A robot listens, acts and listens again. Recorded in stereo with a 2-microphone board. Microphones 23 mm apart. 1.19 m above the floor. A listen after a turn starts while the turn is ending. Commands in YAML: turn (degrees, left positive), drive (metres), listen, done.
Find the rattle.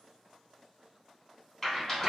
turn: 30
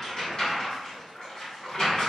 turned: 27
turn: 140
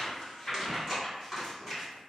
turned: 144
done: "Found it: a rattle, straight ahead, 2 to 4 m away."